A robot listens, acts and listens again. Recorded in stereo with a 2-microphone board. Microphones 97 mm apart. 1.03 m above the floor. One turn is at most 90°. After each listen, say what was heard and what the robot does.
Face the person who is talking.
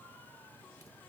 Keep listening.
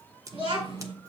Turn 90° right.
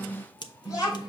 So it is at 15° right. Turn 15° right.
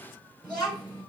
Found it: a child speaking, straight ahead.